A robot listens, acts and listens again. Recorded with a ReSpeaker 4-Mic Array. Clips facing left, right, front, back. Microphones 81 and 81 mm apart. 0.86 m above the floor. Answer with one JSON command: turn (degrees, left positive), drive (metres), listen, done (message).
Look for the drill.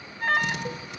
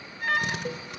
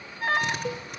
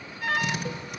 {"turn": -50}
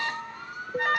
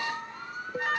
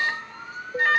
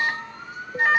{"listen": true}
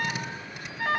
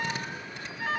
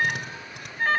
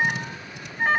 {"turn": 10}
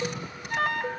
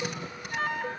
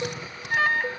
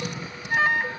{"done": "Facing the drill, over 4 m away."}